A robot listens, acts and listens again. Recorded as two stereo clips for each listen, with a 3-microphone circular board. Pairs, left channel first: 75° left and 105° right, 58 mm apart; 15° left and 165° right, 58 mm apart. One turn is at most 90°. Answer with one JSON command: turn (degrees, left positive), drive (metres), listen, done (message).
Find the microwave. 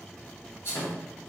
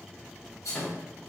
{"turn": 90}
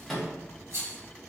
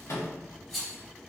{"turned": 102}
{"turn": -10}
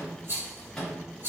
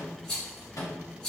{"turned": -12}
{"done": "Facing the microwave."}